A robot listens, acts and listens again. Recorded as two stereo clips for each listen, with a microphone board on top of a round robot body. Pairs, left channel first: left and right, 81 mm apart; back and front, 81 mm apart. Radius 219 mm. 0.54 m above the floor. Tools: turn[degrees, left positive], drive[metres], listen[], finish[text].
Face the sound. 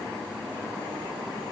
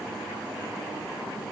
Action: listen[]
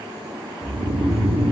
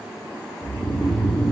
Thought: The snoring: 100° right.
Action: turn[-100]
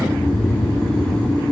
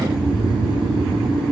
Thought: The snoring is now 10° left.
Action: turn[10]
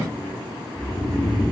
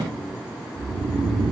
Action: finish[Found it: snoring, straight ahead.]